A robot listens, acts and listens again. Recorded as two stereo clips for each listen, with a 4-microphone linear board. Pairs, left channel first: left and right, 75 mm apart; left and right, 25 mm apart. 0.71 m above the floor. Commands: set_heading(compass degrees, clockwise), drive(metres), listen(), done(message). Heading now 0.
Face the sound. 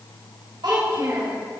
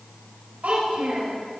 set_heading(90)
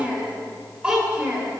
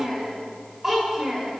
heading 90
set_heading(105)
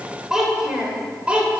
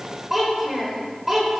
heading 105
set_heading(120)
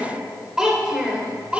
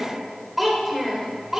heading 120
set_heading(135)
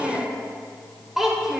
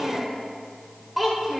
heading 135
done("Found it: a child speaking, straight ahead.")